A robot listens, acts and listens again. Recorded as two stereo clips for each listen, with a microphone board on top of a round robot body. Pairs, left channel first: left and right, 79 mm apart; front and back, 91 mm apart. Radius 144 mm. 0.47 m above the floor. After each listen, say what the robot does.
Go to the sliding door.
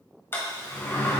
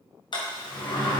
Turn 30° left.
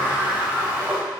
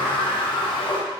Turn 15° right.
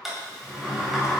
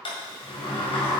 Drive 1.0 m forward.
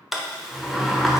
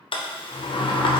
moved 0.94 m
Drive 1.0 m forward.
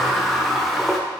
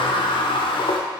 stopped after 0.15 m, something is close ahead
I am next to the sliding door.